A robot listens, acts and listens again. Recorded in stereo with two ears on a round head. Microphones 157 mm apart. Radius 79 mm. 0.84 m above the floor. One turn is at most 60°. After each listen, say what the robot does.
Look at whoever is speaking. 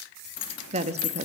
Turn 40° right.
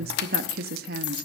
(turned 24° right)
Turn 60° right.
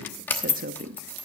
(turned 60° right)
Turn 55° right.
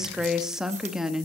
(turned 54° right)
Found it: a woman speaking, straight ahead.